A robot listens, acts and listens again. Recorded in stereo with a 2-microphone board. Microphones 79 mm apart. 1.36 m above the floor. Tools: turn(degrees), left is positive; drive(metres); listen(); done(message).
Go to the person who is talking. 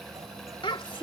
turn(degrees=90)
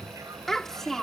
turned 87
drive(metres=1.0)
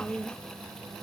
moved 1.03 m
turn(degrees=15)
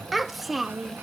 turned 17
drive(metres=1.0)
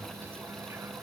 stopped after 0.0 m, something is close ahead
listen()
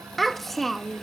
done("I am next to the child speaking.")